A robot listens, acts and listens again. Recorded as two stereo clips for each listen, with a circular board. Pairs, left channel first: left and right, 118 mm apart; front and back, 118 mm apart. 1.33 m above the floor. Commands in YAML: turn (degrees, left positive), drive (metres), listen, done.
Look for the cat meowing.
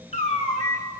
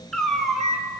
turn: 90
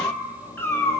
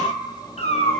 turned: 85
turn: 20
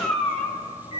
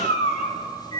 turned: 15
turn: 10
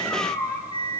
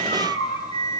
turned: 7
done: "Found it: a cat meowing, straight ahead."